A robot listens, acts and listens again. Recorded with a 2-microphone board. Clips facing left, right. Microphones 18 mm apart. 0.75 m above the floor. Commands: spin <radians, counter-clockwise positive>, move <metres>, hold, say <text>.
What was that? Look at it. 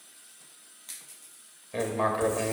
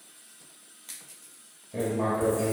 spin 0.79
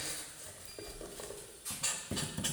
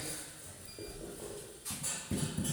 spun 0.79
spin 1.40
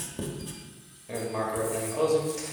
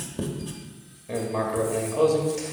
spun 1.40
say Found it: writing, straight ahead, 1 to 2 m away.